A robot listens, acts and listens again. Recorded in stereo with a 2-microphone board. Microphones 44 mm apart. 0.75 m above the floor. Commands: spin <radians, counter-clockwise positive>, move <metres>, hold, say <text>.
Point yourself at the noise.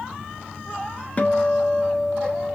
spin 0.52
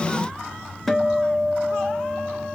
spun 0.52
say Found it: a guitar, straight ahead, under 1 m away.